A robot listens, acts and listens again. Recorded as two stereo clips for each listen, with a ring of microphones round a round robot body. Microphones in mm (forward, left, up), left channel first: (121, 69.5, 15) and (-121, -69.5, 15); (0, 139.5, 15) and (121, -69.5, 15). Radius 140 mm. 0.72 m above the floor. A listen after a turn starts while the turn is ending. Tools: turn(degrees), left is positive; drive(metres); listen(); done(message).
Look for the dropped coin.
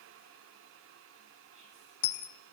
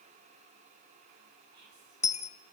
turn(degrees=55)
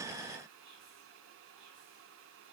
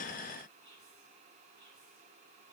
done("I heard a dropped coin from this way, but can't make it out now.")